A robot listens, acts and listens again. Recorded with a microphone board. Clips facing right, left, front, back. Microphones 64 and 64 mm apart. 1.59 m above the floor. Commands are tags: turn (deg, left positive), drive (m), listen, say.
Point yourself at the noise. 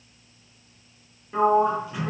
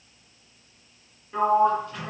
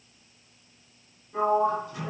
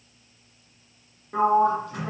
<turn deg="-170"/>
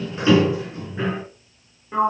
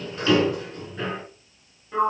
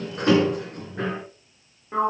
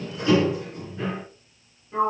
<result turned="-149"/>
<turn deg="-20"/>
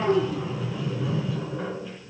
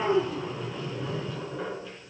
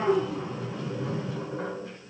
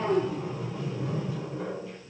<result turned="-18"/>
<say>Found it: a sliding door, straight ahead.</say>